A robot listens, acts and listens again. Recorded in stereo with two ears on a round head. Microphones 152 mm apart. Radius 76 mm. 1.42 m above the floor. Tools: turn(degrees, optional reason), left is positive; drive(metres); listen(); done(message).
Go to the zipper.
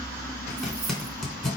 turn(degrees=30)
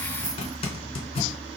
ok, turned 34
turn(degrees=145, reason="So it is at 145° left.")
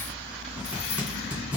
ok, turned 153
turn(degrees=-10, reason="Nothing new. It was at 10° right.")
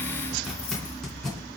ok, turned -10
drive(metres=1.0)
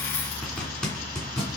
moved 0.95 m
drive(metres=1.0)
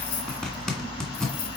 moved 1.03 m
drive(metres=1.0)
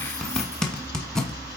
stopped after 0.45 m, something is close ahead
done("Arrived at the zipper, straight ahead.")